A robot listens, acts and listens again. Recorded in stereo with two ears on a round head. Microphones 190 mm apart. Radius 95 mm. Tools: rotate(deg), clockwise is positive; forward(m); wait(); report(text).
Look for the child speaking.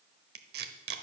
wait()
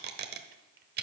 wait()
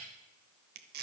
report("I can't make out a child speaking to turn to.")